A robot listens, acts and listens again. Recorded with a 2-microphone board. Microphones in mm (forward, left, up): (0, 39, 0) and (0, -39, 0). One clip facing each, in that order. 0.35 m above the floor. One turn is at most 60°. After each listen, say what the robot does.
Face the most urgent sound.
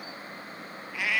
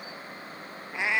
Keep listening.
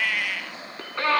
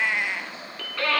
Turn 25° left.
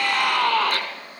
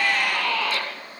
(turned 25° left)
Turn 60° left.
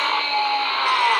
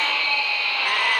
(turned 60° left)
Turn 50° left.
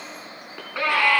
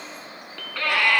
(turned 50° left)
Turn 20° left.
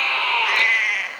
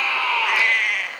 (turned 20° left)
Facing the scream, 2 to 4 m away.